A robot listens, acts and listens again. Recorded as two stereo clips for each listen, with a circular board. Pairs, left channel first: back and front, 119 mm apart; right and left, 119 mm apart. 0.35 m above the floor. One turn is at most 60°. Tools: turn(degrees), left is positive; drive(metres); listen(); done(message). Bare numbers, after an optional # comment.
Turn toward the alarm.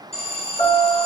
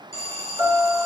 # The alarm: 150° right.
turn(-60)
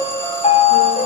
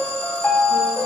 # Nothing new. It was at 90° right.
turn(-60)
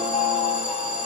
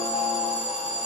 # The alarm is now 80° right.
turn(-60)
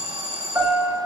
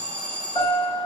# The alarm is now 10° right.
turn(-10)
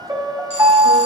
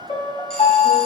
listen()
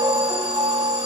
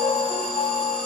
listen()
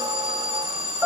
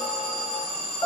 done("Facing the alarm, 2 to 4 m away.")